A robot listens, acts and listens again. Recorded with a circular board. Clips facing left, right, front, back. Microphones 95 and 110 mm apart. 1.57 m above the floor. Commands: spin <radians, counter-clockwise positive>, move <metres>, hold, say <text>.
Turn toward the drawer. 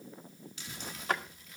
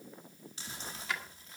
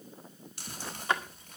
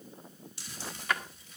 spin 0.96
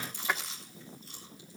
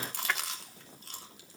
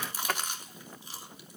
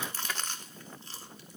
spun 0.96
spin 0.26
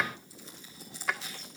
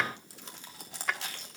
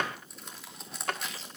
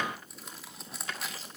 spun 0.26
say Facing the drawer.